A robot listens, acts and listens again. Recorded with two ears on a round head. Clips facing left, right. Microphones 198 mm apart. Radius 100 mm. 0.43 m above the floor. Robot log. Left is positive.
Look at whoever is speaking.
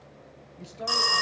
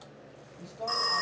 note: The woman speaking: about 20° left or 160° left.
cmd yaw +20
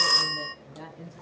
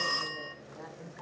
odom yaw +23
note: So it is at 130° left.
cmd yaw +130
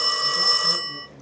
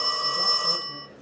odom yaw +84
note: Nothing new. It was at 50° left.
cmd yaw +50
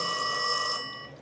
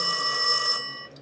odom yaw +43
cmd idle
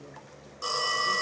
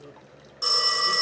end: I heard a woman speaking from this way, but can't make it out now.